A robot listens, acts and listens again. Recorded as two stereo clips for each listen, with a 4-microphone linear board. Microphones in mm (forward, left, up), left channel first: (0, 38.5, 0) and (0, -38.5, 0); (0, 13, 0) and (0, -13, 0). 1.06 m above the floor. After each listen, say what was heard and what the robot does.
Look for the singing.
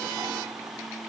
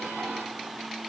Keep listening.
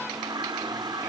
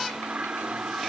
Keep listening.
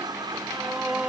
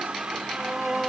Turn 30° right.
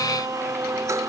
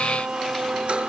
So it is at 130° right. Turn 130° right.
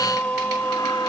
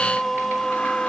The singing is now 25° left. Turn 25° left.
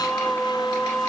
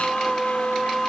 The singing is now 10° left. Turn 10° left.
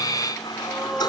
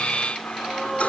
Facing the singing.